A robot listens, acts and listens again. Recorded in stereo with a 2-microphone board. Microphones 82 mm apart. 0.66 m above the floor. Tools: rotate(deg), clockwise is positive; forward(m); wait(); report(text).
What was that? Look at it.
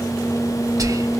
rotate(45)
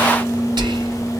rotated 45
rotate(85)
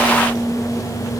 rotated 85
wait()
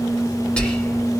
rotate(-15)
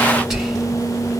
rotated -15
report("Facing the whispering.")